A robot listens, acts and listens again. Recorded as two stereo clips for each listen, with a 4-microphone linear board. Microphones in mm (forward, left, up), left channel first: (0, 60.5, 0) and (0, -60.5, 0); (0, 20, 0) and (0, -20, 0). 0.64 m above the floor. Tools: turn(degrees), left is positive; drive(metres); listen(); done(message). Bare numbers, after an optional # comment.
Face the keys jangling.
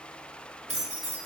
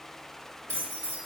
# The keys jangling: about 60° right or 120° right.
turn(-60)
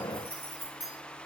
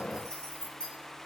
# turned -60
# So it is at 30° left.
turn(30)
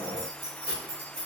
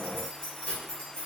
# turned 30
# The keys jangling is now 40° left.
turn(40)
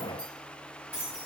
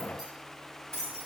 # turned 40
# The keys jangling is now 15° left.
turn(15)
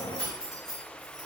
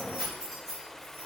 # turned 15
done("Found it: keys jangling, straight ahead.")